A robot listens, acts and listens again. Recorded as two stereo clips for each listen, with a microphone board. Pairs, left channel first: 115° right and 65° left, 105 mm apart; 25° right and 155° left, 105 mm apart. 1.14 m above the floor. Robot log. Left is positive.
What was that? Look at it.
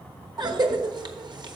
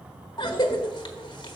note: The cough: 20° left.
cmd yaw +20
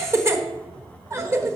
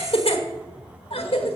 end: Found it: a cough, straight ahead.